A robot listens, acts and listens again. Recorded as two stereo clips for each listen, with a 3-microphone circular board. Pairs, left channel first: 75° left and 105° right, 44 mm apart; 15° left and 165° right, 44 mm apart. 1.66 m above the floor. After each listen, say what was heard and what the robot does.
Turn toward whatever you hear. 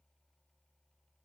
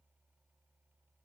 Keep listening.
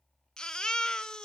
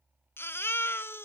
Facing the baby crying, under 1 m away.